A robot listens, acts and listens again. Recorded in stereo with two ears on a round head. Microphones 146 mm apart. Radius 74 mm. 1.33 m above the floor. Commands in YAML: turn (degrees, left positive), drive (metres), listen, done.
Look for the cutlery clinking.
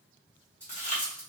turn: 30
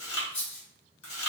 turn: 140
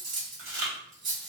turn: -30
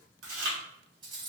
turn: -30
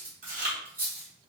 turn: -10
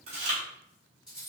done: "Facing the cutlery clinking."